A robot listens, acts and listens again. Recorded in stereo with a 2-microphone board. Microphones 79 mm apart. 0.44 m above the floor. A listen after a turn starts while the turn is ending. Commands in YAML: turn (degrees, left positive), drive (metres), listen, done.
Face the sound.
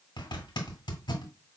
turn: 90
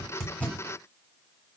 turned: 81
turn: 10
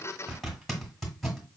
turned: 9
done: "Found it: a zipper, straight ahead."